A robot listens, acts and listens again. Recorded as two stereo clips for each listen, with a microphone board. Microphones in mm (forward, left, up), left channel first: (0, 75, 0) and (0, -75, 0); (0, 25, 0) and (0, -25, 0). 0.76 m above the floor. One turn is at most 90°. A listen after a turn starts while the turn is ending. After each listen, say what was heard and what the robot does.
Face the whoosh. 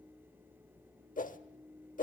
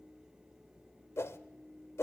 The whoosh: about 65° left or 115° left. Turn 65° left.
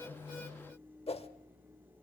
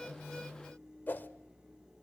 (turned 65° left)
So it is at 45° left. Turn 45° left.
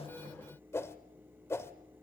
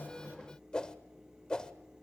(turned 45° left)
The whoosh is now 20° left. Turn 20° left.
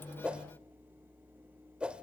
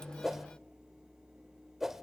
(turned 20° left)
Found it: a whoosh, straight ahead.